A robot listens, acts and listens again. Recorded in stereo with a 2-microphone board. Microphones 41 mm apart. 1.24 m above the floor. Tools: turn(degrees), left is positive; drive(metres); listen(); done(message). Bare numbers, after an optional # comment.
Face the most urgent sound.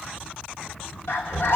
# The scream: about 75° left or 105° left.
turn(75)
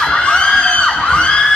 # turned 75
# So it is at 30° left.
turn(30)
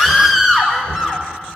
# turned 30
done("Found it: a scream, straight ahead, 1 to 2 m away.")